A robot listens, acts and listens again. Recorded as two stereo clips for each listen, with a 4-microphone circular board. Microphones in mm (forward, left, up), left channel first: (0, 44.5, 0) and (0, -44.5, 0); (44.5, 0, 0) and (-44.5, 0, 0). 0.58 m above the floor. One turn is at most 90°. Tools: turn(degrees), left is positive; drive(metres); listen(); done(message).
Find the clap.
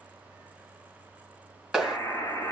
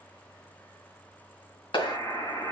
done("Facing the clap, 2 to 4 m away.")